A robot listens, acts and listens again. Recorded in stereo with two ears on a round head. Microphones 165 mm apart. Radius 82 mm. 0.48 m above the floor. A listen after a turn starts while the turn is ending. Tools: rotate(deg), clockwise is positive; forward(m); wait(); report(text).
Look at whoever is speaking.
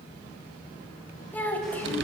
rotate(-30)
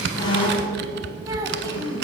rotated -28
wait()
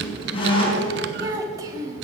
rotate(20)
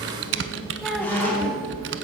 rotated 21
wait()
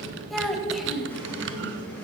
report("Facing the child speaking.")